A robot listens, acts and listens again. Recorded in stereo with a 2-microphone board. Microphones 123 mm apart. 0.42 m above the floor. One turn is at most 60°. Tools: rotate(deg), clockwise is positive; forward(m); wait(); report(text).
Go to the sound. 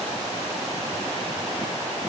wait()
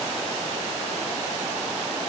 wait()
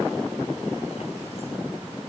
report("I can't make out anything.")